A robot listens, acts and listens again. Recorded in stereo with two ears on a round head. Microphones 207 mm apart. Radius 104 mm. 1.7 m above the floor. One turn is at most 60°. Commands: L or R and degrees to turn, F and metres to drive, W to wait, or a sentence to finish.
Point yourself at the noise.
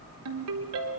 R60
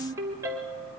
R10
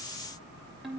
Facing the ringtone, 2 to 4 m away.